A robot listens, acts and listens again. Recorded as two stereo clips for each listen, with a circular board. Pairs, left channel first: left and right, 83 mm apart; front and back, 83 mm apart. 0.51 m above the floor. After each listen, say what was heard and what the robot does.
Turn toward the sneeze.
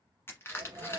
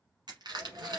The sneeze: 130° right. Turn 130° right.
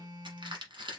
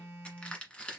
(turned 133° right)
I heard a sneeze from this way, but can't make it out now.